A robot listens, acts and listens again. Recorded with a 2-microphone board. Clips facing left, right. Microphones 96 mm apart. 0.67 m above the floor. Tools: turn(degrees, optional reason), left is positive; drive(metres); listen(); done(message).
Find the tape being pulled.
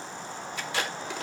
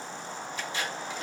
turn(degrees=75, reason="The tape being pulled: about 75° left or 105° left.")
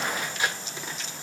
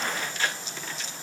turn(degrees=15, reason="So it is at 15° left.")
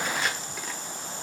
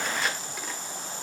done("Facing the tape being pulled, 1 to 2 m away.")